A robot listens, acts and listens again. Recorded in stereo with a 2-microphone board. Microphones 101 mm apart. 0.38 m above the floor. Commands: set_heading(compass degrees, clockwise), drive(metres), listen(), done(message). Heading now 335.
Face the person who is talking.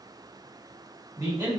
set_heading(15)
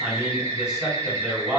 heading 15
done("Found it: a man speaking, straight ahead.")